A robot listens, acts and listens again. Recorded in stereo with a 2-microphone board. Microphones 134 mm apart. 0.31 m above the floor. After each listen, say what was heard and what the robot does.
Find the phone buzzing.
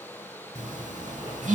The phone buzzing: about 65° right or 115° right. Turn 65° right.
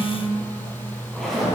So it is at 40° right. Turn 40° right.
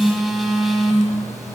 Found it: a phone buzzing, straight ahead.